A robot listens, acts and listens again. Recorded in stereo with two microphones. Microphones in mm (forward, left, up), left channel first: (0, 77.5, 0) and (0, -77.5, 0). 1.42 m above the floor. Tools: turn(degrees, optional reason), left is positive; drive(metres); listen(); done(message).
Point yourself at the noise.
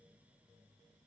listen()
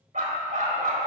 turn(degrees=-55, reason="The dog barking: about 55° right or 125° right.")
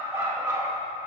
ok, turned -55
turn(degrees=-15, reason="So it is at 15° right.")
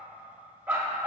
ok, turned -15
turn(degrees=-10, reason="The dog barking is now 10° right.")
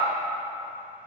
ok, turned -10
done("Found it: a dog barking, straight ahead, 1 to 2 m away.")